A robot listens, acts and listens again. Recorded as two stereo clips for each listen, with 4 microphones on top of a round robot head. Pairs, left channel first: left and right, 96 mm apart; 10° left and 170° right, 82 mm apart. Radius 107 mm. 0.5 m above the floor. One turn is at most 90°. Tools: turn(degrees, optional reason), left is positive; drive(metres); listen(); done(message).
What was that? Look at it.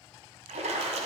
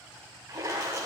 turn(degrees=-90, reason="The splash: 110° right.")
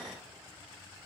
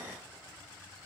turn(degrees=-20, reason="Nothing new. It was at 20° right.")
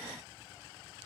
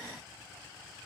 done("Facing where the splash came from. I can't hear it now.")